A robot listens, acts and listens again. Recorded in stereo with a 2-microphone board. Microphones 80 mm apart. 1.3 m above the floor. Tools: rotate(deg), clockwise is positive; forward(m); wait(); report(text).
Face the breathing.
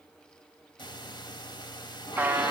rotate(-75)
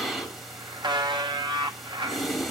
report("Found it: breathing, straight ahead, 2 to 4 m away.")